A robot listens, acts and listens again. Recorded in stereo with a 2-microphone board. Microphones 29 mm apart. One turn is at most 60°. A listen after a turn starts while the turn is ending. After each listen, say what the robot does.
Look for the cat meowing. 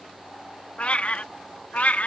Turn 60° left.
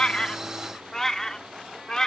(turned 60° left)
Turn 25° left.
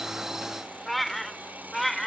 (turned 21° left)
Turn 10° left.
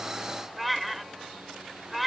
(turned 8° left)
Found it: a cat meowing, straight ahead.